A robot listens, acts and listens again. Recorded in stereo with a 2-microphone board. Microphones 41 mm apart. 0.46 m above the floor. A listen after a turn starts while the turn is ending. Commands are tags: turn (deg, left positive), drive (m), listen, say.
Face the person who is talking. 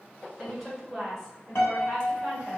<turn deg="30"/>
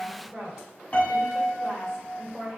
<turn deg="-30"/>
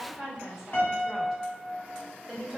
<turn deg="-10"/>
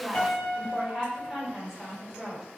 <say>Facing the woman speaking.</say>